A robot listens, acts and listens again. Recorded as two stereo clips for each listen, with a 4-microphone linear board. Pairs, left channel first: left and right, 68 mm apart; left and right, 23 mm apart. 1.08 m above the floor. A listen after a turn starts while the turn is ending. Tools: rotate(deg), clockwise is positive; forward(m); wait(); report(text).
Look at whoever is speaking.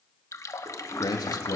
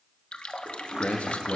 rotate(-75)
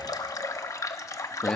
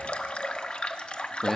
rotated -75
rotate(-10)
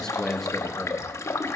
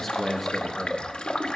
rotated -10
report("Found it: a man speaking, straight ahead.")